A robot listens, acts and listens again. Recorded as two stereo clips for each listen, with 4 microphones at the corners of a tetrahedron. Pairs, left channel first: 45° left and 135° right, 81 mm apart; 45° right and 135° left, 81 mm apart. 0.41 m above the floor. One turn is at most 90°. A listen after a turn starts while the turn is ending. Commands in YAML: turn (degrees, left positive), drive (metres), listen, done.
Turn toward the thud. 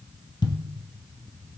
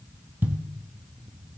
turn: 70
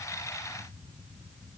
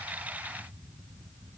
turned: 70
done: "Facing where the thud came from. I can't hear it now."